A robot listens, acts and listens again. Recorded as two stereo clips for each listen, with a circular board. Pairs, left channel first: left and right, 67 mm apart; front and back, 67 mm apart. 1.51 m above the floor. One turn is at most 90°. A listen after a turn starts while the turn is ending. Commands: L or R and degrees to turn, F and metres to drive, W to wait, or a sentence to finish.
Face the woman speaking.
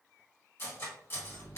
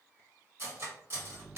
W
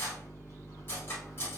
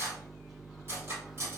W
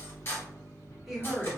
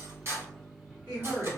R90
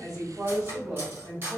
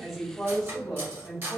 R80
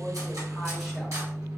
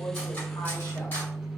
W
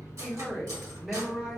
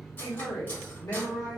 Facing the woman speaking, 1 to 2 m away.